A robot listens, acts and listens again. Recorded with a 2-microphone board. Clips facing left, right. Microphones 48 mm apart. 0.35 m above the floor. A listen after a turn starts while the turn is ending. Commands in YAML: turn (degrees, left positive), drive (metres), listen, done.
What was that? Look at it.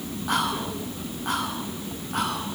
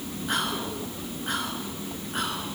turn: 60
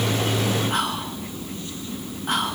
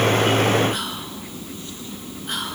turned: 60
turn: 55
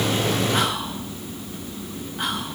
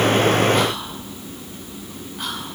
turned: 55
turn: 10
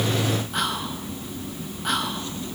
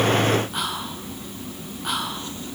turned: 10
done: "Facing the whispering."